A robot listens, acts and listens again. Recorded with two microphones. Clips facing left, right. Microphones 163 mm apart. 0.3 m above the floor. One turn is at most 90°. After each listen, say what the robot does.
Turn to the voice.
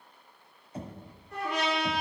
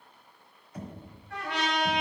Keep listening.
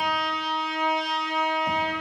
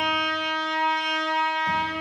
Keep listening.
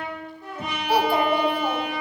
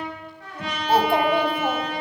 Turn 25° right.
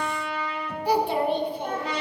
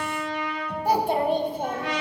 Turn 90° right.
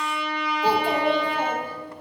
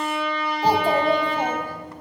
Turn 50° right.
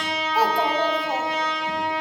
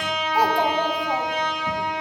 Turn 15° right.
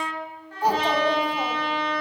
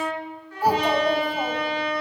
Facing the child speaking, 1 to 2 m away.